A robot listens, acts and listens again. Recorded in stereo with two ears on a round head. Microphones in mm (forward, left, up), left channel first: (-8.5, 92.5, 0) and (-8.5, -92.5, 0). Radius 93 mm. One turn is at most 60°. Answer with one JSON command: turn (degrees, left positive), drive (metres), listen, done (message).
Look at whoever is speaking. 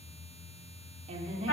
{"turn": -30}
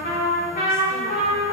{"listen": true}
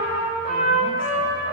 {"listen": true}
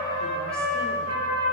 {"done": "I heard a woman speaking, but can't make it out now. It was about straight ahead or 120° right."}